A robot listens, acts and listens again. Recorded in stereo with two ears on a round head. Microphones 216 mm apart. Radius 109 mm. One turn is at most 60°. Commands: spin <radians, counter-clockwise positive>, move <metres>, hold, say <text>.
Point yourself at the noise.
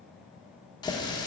spin 0.35
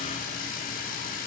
spin 1.05
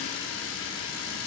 spin 1.05
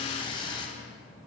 spin 0.35
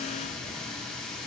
say Facing the running tap.